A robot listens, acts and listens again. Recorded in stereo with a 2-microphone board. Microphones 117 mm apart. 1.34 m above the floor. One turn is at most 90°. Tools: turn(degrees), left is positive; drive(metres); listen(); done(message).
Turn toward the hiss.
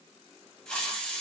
turn(degrees=30)
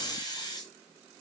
turn(degrees=90)
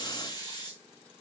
turn(degrees=40)
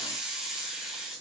done("Found it: a hiss, straight ahead.")